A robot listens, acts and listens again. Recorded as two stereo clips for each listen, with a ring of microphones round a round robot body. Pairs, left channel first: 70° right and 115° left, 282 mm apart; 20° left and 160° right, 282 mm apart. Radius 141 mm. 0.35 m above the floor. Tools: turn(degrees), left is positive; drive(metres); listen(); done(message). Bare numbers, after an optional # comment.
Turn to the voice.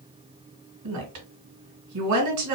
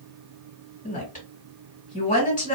# The woman speaking: 85° left.
turn(85)
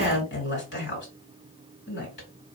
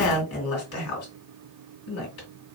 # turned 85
# The woman speaking is now 15° right.
turn(-15)
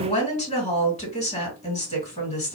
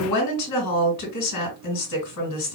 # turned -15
done("Found it: a woman speaking, straight ahead.")